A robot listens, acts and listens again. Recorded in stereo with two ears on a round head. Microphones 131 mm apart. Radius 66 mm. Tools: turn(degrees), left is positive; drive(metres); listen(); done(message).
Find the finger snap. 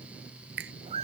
turn(degrees=-90)
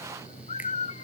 listen()
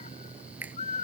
turn(degrees=-10)
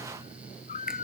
listen()
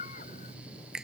done("Facing the finger snap.")